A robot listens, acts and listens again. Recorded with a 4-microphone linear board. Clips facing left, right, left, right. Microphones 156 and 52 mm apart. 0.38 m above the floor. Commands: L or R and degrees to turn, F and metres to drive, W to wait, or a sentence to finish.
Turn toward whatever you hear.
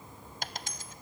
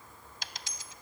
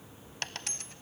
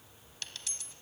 L50
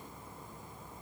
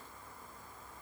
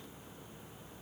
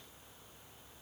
W
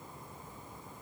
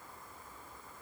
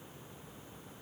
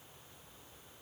I heard a dropped coin, but can't make it out now. It was about straight ahead or 80° left.